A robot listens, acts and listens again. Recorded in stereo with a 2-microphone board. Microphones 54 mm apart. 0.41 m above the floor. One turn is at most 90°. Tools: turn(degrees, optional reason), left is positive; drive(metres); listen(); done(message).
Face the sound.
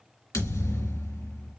turn(degrees=90)
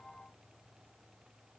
done("I heard a thud from this way, but can't make it out now.")